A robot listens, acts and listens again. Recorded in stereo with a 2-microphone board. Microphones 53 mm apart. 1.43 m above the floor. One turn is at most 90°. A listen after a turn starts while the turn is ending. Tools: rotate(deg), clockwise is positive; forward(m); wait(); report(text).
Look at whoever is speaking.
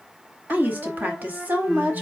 rotate(35)
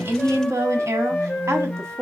rotate(90)
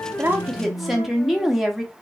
report("Found it: a woman speaking, straight ahead.")